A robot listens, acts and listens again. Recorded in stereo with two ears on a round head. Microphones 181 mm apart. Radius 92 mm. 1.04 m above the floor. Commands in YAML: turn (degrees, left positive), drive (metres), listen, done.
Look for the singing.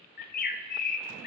listen: true
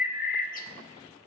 listen: true
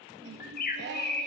turn: -60
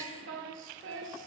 turn: -60
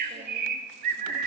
listen: true
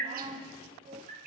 turn: -30
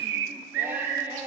turn: -10
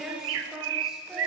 done: "Facing the singing."